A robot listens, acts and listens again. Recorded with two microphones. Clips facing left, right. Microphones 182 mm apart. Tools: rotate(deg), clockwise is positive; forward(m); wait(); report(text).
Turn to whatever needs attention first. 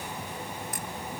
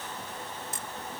wait()
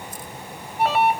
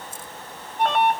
rotate(-30)
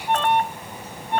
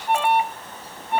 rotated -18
rotate(10)
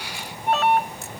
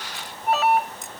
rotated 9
report("Found it: an alarm, straight ahead.")